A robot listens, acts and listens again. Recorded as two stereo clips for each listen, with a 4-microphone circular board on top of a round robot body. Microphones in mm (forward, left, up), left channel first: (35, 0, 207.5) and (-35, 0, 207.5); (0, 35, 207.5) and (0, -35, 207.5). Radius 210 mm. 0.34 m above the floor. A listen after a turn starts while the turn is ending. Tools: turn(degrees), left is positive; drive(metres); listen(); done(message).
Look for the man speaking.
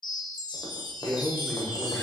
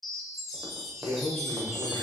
turn(degrees=75)
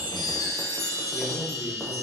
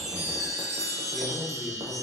listen()
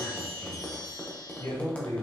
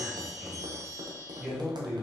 turn(degrees=-10)
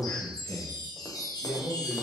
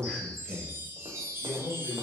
turn(degrees=-10)
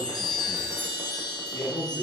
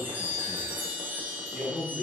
done("Facing the man speaking.")